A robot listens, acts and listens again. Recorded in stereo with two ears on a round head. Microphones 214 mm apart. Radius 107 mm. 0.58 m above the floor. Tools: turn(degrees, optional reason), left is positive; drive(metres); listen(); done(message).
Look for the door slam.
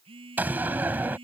turn(degrees=-30)
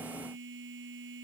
listen()
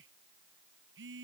done("I heard a door slam, but can't make it out now. It was about 20° left or 140° right.")